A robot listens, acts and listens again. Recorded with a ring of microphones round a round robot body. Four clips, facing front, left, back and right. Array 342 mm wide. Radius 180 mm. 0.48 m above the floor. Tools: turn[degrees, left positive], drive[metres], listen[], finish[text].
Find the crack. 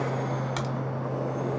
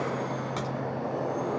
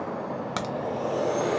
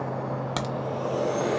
Thought: The crack: 110° right.
Action: turn[-110]
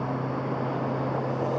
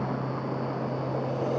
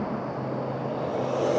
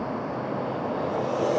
Action: finish[Facing where the crack came from. I can't hear it now.]